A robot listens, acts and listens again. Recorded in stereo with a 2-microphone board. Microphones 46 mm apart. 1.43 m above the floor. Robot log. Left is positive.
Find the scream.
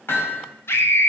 note: The scream: about 65° left or 115° left.
cmd yaw +65
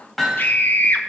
note: So it is at 50° left.
cmd yaw +50
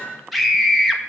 end: Facing the scream.